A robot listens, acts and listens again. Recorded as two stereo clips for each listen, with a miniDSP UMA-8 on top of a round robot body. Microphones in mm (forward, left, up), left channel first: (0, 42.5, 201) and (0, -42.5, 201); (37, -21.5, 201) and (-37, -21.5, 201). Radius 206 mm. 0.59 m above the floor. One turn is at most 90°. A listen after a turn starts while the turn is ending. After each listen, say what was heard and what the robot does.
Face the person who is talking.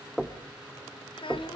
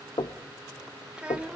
The child speaking: 105° left. Turn 90° left.
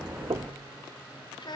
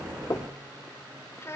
The child speaking is now 55° left. Turn 55° left.
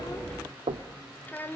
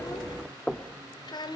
The child speaking is now 20° left. Turn 20° left.
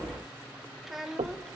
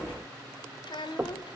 Found it: a child speaking, straight ahead, 2 to 4 m away.